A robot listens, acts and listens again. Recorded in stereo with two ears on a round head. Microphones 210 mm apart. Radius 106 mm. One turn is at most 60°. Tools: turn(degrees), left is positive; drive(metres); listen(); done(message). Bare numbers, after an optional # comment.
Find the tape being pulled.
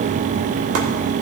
listen()
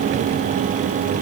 listen()
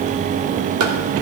done("I can't make out tape being pulled.")